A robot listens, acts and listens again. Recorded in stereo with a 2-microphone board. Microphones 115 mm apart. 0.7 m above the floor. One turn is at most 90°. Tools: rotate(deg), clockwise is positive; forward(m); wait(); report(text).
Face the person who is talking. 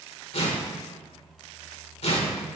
wait()
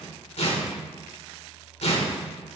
wait()
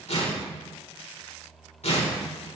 report("I can't make out anyone speaking, only tearing paper.")